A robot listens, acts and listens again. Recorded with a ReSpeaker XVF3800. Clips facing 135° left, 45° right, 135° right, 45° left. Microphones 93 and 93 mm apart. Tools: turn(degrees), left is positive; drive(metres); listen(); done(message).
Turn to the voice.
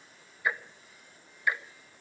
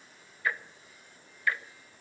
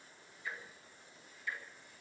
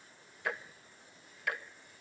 listen()
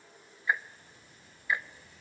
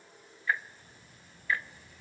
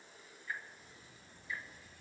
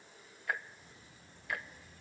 turn(degrees=-25)
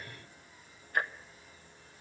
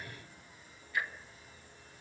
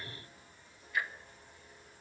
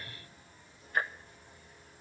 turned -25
done("Found it: a child speaking, straight ahead, over 4 m away.")